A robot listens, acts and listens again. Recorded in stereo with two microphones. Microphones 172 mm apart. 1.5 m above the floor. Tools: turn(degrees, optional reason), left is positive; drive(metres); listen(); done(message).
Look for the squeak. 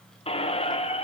turn(degrees=35, reason="The squeak: about 35° left or 145° left.")
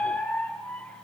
turn(degrees=10, reason="So it is at 10° left.")
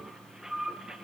done("Found it: a squeak, straight ahead.")